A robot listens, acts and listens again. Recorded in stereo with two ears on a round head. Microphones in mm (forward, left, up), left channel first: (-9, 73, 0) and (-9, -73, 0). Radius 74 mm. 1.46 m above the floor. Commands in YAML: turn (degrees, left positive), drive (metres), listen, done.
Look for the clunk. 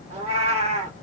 listen: true
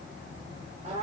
listen: true
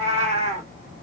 done: "I can't make out a clunk, only a cat meowing."